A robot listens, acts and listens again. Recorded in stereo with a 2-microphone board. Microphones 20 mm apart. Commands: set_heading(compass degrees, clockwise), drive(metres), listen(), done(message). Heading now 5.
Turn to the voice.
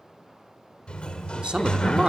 set_heading(65)
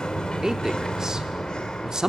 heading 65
set_heading(105)
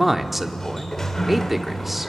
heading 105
set_heading(115)
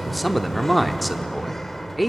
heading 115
done("Facing the man speaking, 1 to 2 m away.")